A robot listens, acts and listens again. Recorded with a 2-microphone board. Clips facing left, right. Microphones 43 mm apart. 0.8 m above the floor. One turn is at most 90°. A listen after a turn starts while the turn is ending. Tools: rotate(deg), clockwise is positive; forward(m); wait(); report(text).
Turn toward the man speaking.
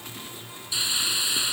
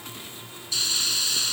wait()
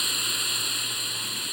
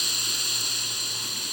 wait()
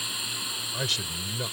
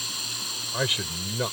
rotate(30)
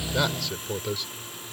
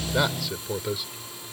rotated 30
report("Facing the man speaking.")